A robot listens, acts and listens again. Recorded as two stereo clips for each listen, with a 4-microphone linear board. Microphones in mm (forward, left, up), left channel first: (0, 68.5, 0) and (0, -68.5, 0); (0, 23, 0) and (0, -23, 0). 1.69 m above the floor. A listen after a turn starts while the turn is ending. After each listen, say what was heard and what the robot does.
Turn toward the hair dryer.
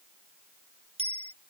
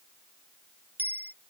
Keep listening.
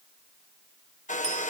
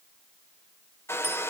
The hair dryer: about 65° left or 115° left. Turn 65° left.
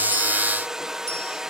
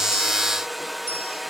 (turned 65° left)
Found it: a hair dryer, straight ahead.